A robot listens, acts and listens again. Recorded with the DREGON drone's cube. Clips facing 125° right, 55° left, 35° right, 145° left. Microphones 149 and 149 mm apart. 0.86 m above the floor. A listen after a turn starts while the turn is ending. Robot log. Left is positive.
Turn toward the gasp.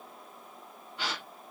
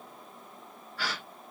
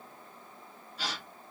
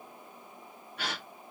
note: The gasp: 165° left.
cmd yaw +165
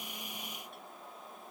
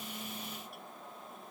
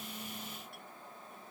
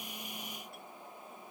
end: Facing where the gasp came from. I can't hear it now.